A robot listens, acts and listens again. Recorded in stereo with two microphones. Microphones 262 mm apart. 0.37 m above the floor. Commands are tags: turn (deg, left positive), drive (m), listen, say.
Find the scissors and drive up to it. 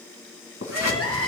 <turn deg="75"/>
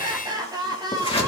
<turn deg="20"/>
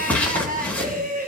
<drive m="1.0"/>
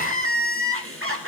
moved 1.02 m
<listen/>
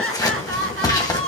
<turn deg="15"/>
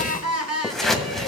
<drive m="1.0"/>
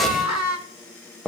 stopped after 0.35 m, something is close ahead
<say>I am next to the scissors.</say>